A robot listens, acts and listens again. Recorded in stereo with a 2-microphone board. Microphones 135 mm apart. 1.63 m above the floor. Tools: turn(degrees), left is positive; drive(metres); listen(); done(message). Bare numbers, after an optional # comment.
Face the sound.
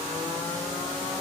listen()
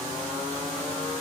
listen()
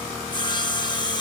# The sawing: about 35° left or 145° left.
turn(35)
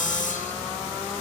# So it is at 110° left.
turn(110)
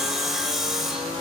done("Found it: sawing, straight ahead.")